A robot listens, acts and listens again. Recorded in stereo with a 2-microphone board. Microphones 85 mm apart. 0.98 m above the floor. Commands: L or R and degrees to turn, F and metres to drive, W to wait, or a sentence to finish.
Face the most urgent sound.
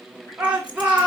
R15
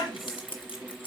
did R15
W
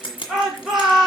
Facing the shout, 2 to 4 m away.